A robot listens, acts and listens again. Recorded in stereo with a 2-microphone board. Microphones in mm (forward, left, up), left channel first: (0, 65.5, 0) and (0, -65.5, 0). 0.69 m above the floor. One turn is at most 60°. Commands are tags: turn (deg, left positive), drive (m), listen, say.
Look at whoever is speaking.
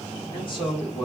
<turn deg="40"/>
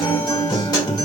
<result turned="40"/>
<listen/>
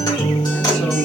<listen/>
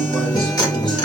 <say>I heard a man speaking, but can't make it out now. It was about straight ahead or 100° left.</say>